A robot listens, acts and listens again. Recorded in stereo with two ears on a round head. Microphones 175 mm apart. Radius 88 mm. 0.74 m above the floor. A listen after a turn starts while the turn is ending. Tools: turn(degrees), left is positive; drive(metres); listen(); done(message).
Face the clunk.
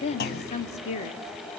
turn(degrees=50)
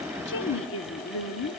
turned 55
listen()
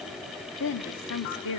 done("I heard a clunk, but can't make it out now. It was about 5° right or 75° left.")